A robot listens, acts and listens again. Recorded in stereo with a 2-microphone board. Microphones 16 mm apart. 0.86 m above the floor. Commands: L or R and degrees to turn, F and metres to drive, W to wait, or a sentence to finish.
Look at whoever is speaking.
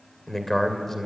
L20
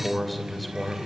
Facing the man speaking, 2 to 4 m away.